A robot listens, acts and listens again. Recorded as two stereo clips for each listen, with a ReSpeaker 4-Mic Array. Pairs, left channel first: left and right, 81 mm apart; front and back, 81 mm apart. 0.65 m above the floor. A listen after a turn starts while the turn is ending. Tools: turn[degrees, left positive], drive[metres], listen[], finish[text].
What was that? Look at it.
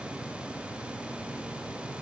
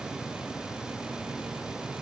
Action: listen[]
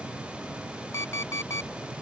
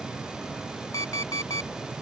Thought: The alarm clock: 40° left.
Action: turn[40]
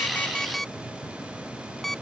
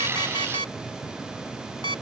Action: finish[Facing the alarm clock.]